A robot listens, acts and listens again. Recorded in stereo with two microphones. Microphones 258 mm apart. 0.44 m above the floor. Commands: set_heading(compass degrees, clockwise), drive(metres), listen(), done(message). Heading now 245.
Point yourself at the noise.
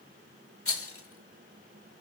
set_heading(185)
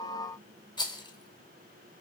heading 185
set_heading(165)
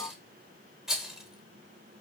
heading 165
done("Facing the rattle.")